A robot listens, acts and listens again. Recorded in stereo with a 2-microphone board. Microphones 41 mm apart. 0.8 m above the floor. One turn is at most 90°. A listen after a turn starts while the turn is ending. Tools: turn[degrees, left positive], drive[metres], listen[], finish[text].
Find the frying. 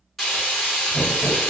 Action: turn[30]
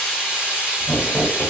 Thought: So it is at 35° right.
Action: turn[-35]
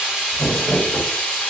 Action: finish[Found it: frying, straight ahead.]